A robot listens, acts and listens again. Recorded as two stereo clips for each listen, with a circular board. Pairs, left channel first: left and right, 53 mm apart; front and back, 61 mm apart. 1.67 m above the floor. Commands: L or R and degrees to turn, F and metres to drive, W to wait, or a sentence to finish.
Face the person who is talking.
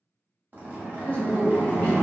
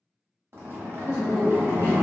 L150
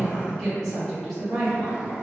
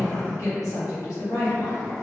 L10
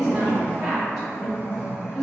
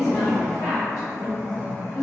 Found it: a woman speaking, straight ahead.